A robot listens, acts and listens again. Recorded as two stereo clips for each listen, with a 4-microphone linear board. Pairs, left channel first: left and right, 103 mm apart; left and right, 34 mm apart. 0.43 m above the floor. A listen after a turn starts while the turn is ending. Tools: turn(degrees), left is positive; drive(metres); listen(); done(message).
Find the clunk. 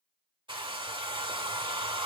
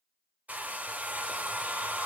listen()
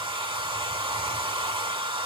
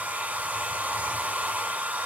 listen()
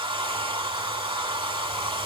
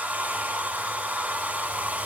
done("I can't make out a clunk, only a hair dryer.")